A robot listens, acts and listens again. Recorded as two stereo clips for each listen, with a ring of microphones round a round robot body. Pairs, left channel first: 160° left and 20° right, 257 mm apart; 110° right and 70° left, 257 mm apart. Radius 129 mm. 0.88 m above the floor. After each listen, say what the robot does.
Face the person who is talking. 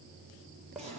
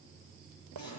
Keep listening.
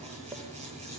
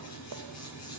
Keep listening.
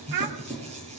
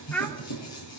Turn 25° right.
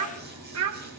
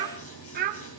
Turn 10° left.
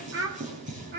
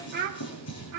Turn 30° left.
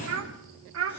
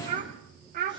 Turn 10° left.
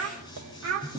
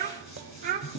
Turn 10° left.
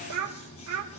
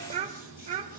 Found it: a child speaking, straight ahead.